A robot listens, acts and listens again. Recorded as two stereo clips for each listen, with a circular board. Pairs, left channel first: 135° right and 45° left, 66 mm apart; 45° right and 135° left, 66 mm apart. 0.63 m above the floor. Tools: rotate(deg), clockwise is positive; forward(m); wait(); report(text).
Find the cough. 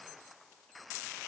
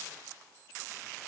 wait()
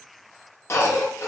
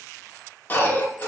rotate(100)
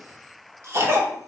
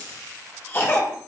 report("Found it: a cough, straight ahead, 1 to 2 m away.")